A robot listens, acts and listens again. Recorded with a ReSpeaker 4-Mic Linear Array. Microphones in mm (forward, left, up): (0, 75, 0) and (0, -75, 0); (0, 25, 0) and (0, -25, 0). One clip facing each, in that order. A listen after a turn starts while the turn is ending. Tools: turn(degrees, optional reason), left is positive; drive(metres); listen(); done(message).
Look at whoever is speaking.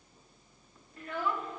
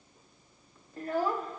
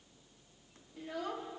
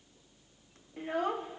turn(degrees=-40, reason="The child speaking: about 40° right or 140° right.")
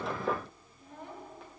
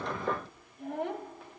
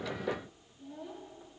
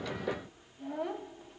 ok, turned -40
turn(degrees=-100, reason="So it is at 100° right.")
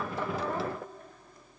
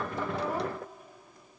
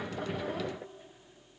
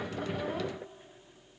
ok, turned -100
listen()
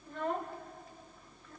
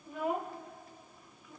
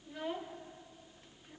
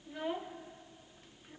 turn(degrees=-10, reason="The child speaking is now 10° right.")
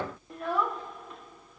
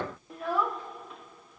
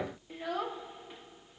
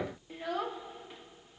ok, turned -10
done("Found it: a child speaking, straight ahead, under 1 m away.")